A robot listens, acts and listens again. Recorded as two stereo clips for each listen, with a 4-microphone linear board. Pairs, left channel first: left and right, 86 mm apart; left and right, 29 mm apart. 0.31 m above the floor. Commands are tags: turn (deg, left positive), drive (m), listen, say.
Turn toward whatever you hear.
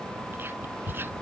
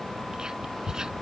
<turn deg="-25"/>
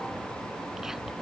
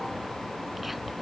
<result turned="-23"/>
<listen/>
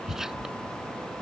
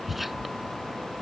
<say>Facing the whispering.</say>